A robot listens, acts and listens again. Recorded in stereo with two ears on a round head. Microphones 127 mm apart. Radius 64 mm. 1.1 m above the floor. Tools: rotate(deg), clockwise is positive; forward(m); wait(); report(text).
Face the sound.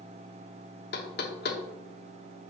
rotate(-75)
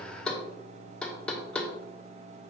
report("Facing the knocking, 1 to 2 m away.")